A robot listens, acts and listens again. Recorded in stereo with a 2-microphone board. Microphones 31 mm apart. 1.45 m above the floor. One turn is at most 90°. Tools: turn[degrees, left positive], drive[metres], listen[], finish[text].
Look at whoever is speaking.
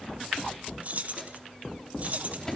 Action: listen[]
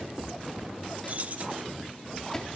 Action: listen[]
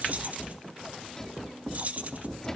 Action: finish[I can't make out anyone speaking, only keys jangling and a microwave.]